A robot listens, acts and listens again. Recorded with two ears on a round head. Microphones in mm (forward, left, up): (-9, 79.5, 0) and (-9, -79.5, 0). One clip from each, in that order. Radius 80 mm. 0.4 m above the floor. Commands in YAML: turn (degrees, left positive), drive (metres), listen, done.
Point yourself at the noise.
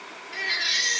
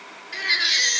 turn: -45
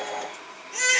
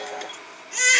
turn: -90
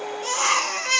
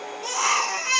turn: 20
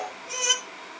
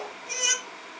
done: "Facing the baby crying, 2 to 4 m away."